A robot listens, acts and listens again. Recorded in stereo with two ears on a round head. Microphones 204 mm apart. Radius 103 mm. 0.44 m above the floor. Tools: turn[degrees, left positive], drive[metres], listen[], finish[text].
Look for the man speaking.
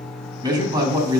Thought: The man speaking: about 20° right or 160° right.
Action: turn[-20]
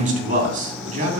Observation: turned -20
Thought: So it is at 140° right.
Action: turn[-140]
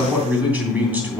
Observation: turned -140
Thought: The man speaking is now 10° right.
Action: turn[-10]
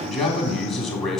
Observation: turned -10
Action: finish[Facing the man speaking.]